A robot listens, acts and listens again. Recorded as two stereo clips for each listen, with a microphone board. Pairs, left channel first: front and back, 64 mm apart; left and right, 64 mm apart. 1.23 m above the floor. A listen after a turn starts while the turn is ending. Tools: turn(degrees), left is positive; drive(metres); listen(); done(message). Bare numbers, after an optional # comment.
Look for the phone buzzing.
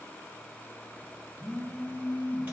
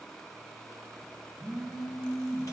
# The phone buzzing: 175° left.
turn(175)
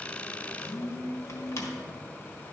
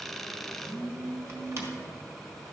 # The phone buzzing is now 15° left.
turn(15)
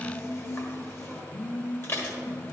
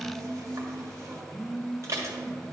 done("Found it: a phone buzzing, straight ahead.")